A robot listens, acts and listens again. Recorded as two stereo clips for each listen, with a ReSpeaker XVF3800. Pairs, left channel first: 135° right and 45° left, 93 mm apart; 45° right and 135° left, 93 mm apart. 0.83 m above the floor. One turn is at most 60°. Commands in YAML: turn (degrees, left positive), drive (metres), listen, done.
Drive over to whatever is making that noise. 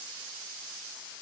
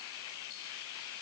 listen: true
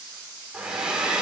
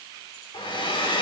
turn: -35
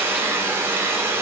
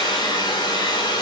turn: -15
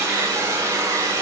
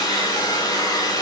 drive: 1.0
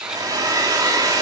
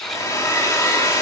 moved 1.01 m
drive: 1.0
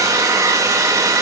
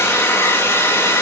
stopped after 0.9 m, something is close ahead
done: "I am next to the hair dryer."